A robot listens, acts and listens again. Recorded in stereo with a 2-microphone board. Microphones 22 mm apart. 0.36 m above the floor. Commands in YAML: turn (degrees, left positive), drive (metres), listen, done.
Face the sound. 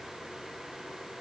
listen: true
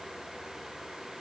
listen: true
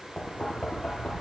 turn: 35
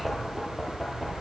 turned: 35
done: "Facing the knocking, over 4 m away."